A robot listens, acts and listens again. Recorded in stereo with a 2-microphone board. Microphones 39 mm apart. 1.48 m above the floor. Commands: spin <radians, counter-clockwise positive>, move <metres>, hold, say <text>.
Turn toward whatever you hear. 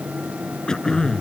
spin 0.35
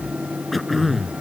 say Facing the throat clearing.